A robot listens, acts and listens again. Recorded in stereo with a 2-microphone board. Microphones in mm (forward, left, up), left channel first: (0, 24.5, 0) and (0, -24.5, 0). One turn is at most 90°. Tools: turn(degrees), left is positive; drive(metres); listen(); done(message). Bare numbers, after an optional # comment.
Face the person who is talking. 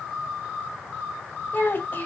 # The child speaking: about 40° left or 140° left.
turn(40)
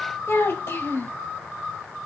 # So it is at 90° left.
turn(90)
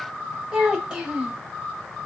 # The child speaking is now 20° right.
turn(-20)
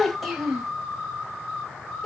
done("Facing the child speaking, 1 to 2 m away.")